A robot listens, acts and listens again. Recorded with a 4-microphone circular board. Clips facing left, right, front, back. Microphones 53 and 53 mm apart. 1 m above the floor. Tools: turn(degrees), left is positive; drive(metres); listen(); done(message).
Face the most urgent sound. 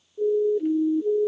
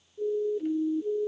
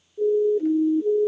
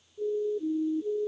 turn(degrees=40)
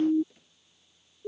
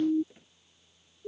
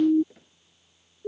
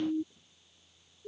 turn(degrees=20)
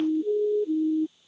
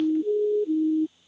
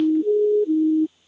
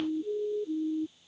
done("Facing the siren.")